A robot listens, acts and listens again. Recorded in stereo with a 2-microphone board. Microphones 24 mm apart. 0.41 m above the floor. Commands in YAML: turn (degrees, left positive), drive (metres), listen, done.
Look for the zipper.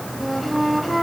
listen: true
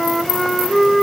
listen: true
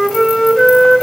done: "I can't make out a zipper to turn to."